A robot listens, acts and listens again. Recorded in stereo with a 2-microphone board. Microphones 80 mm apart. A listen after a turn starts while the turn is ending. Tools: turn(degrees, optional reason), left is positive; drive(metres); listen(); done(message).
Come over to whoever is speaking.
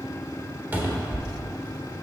listen()
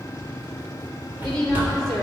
turn(degrees=30)
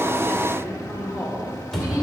turn(degrees=-15, reason="So it is at 15° right.")
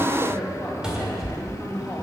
drive(metres=1.0)
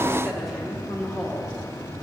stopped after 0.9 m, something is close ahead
done("Arrived at the woman speaking, straight ahead.")